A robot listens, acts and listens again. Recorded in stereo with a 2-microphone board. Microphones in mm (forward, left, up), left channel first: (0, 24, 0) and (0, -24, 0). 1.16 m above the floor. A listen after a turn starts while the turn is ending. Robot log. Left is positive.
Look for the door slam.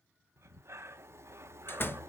note: The door slam: about 45° left or 135° left.
cmd yaw +45
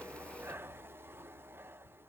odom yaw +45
cmd idle
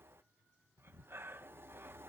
end: I heard a door slam, but can't make it out now. It was about straight ahead or 90° left.